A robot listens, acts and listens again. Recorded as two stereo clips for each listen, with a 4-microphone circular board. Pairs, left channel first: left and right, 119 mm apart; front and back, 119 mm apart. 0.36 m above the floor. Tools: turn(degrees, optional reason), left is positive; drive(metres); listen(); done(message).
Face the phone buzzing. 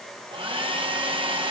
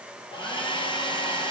listen()
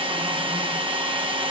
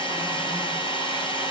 listen()
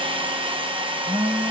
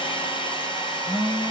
turn(degrees=25, reason="The phone buzzing: 25° left.")
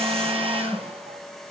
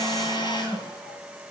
turn(degrees=15, reason="The phone buzzing is now 15° left.")
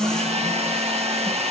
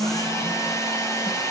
done("Facing the phone buzzing, over 4 m away.")